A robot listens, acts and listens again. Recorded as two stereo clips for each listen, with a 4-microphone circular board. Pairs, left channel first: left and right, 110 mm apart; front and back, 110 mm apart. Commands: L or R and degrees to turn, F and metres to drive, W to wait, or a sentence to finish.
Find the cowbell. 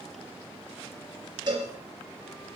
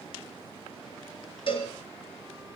R40
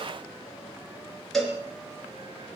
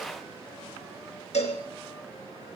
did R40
Facing the cowbell, 2 to 4 m away.